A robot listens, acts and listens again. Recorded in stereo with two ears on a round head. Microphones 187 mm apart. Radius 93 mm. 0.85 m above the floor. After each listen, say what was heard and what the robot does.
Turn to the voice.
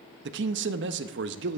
The man speaking: about 60° right or 120° right. Turn 60° right.
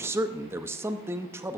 So it is at 15° right. Turn 15° right.
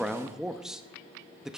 Facing the man speaking.